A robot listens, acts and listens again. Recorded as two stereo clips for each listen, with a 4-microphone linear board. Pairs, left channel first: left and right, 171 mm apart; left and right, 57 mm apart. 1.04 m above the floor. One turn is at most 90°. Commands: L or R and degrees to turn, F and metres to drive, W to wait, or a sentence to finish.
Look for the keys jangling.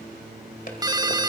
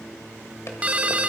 W
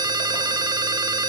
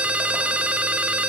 W
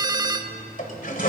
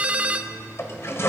I can't make out keys jangling to turn to.